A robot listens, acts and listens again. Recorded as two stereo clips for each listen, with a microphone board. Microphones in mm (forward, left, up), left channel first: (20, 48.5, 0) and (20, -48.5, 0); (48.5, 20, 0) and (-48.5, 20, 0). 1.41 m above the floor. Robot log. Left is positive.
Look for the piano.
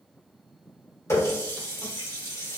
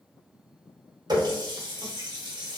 cmd idle
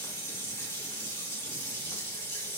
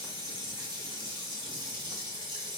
cmd idle
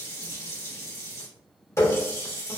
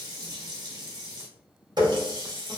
end: I can't make out a piano, only a running tap.